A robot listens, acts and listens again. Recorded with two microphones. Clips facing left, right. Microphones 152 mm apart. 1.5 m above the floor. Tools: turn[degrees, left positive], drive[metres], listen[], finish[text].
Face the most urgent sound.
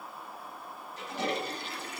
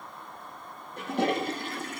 Action: listen[]
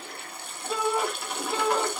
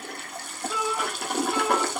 Thought: The shout: about 35° left or 145° left.
Action: turn[35]
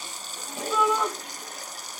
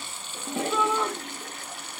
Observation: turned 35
Action: finish[Facing the shout.]